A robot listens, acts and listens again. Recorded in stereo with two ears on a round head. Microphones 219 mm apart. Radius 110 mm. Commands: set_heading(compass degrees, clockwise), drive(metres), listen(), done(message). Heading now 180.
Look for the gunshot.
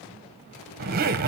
listen()
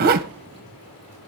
listen()
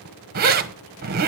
done("I can't make out a gunshot, only a zipper.")